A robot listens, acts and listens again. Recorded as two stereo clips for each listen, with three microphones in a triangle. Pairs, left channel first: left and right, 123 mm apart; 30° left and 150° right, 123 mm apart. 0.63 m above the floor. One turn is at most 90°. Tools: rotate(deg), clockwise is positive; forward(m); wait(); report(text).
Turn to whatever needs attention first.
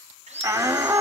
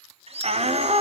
rotate(90)
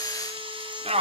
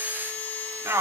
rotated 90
rotate(85)
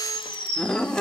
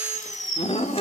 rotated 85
report("Facing the shout.")